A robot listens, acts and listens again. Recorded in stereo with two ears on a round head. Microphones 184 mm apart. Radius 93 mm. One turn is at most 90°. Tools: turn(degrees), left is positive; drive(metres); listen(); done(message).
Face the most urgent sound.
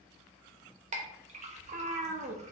listen()
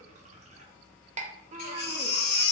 turn(degrees=55)
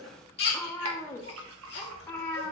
turn(degrees=60)
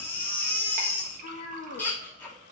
turn(degrees=10)
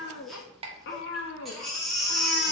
done("Facing the baby crying, 1 to 2 m away.")